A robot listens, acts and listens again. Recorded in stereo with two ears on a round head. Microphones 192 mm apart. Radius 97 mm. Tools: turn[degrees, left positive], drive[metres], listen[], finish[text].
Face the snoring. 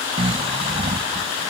Thought: The snoring: about 30° right or 150° right.
Action: turn[-30]
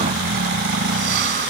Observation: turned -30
Thought: So it is at 115° right.
Action: turn[-115]
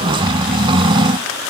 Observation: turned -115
Thought: The snoring is now 30° right.
Action: turn[-30]
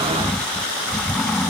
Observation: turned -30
Action: finish[Facing the snoring.]